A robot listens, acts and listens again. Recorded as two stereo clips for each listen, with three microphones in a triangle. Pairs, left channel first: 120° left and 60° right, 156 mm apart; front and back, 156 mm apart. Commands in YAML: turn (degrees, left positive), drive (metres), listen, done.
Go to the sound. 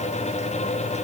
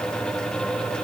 listen: true
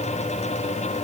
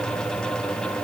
listen: true
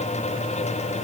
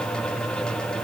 done: "I can't make out anything to turn to."